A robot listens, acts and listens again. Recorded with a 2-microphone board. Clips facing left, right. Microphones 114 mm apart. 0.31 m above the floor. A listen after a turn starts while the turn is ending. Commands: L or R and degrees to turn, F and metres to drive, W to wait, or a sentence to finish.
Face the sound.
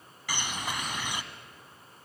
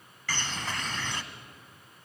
L30
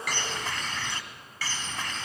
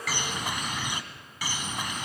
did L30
R15
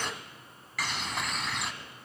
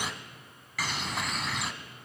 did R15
Facing the bird, 1 to 2 m away.